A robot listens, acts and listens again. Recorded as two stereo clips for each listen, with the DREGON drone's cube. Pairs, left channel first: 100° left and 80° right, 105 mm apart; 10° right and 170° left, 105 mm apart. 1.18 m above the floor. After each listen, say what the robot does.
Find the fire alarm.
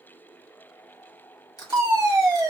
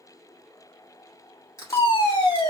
Turn 30° right.
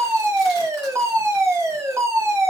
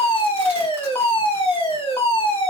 Turn 25° right.
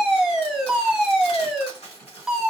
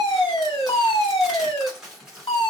Facing the fire alarm, 1 to 2 m away.